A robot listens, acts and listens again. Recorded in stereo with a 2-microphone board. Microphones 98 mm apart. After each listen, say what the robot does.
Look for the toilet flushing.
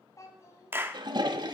Turn 50° right.
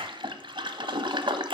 Turn 70° right.
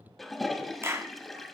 Facing the toilet flushing.